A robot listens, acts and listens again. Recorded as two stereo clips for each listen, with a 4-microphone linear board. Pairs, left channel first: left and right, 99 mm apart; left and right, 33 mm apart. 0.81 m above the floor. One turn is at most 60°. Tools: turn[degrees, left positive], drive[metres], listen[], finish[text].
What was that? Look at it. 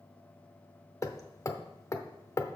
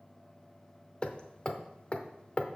Thought: The hammering: about 30° left or 150° left.
Action: turn[30]
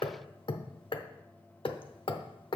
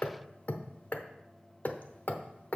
Thought: So it is at 115° left.
Action: turn[60]
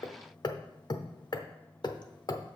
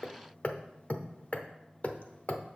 Thought: The hammering is now 50° left.
Action: turn[50]
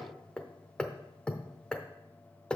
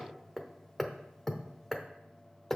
Thought: The hammering is now 10° left.
Action: turn[10]
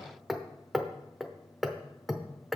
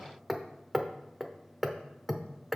Action: finish[Found it: hammering, straight ahead, under 1 m away.]